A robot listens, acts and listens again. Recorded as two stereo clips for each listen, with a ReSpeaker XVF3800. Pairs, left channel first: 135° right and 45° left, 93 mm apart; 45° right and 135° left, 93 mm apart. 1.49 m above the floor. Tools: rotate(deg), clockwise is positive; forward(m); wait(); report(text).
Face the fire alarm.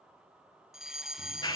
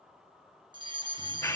rotate(-130)
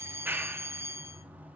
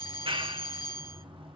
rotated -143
rotate(10)
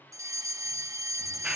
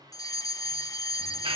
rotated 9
report("Facing the fire alarm, 1 to 2 m away.")